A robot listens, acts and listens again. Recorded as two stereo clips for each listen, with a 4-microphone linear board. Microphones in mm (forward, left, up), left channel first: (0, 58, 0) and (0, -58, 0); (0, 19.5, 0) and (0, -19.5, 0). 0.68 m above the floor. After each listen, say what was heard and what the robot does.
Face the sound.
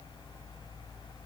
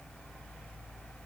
Keep listening.
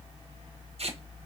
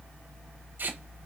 The tape being pulled: about 60° right or 120° right. Turn 60° right.
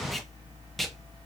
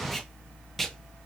Found it: tape being pulled, straight ahead, 1 to 2 m away.